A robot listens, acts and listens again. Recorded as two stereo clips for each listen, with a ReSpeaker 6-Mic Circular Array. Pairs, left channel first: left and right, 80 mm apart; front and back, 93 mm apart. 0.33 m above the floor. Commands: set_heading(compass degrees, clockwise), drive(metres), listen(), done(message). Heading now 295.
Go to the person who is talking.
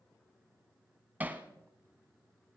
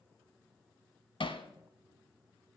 listen()
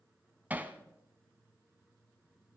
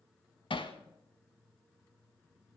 listen()
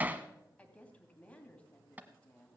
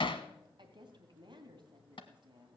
set_heading(135)
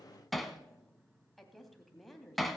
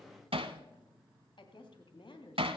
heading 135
drive(1.0)
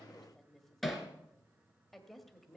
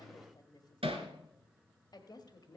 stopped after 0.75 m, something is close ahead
done("Arrived at the woman speaking, straight ahead.")